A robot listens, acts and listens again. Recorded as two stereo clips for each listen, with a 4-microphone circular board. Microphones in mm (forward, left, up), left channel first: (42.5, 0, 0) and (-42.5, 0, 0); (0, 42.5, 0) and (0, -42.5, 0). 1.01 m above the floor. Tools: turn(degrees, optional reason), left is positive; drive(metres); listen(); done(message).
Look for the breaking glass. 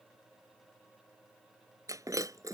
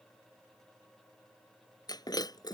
turn(degrees=130, reason="The breaking glass: 130° left.")
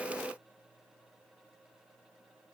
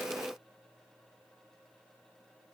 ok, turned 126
done("Facing where the breaking glass came from. I can't hear it now.")